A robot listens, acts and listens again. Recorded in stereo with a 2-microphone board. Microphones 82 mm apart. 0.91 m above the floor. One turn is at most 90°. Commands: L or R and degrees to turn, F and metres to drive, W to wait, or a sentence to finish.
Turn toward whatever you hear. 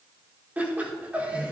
R15
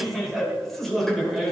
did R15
L30
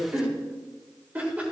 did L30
R20
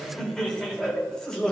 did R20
L10
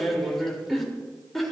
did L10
Facing the laughter, 2 to 4 m away.